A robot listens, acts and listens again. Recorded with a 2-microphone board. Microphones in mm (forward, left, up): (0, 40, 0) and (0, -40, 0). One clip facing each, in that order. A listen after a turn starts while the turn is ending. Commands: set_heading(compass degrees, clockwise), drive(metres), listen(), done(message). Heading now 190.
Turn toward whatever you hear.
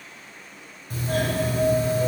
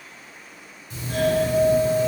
set_heading(135)
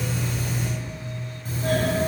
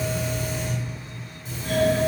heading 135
set_heading(80)
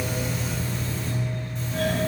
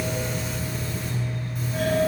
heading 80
set_heading(90)
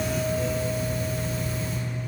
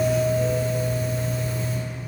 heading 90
done("Facing the doorbell, 2 to 4 m away.")